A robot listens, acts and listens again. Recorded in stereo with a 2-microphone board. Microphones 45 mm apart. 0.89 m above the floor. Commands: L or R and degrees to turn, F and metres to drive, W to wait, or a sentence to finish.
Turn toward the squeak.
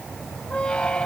L20
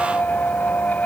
L135
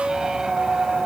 R15
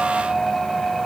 Facing the squeak.